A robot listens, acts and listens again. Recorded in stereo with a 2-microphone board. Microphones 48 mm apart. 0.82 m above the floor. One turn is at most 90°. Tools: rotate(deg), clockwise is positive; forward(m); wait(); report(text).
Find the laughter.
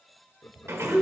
rotate(-70)
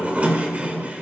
wait()
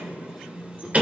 wait()
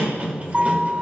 report("I heard laughter, but can't make it out now. It was about straight ahead or 40° left.")